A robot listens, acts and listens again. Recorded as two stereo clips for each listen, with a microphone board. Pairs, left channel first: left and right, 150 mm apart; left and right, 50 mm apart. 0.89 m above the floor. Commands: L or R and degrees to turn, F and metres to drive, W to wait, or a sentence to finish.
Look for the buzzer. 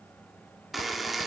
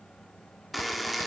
L30
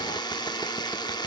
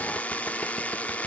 L150
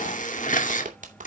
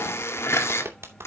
L60
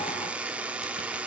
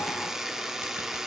R10
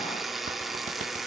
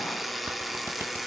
Found it: a buzzer, straight ahead, 1 to 2 m away.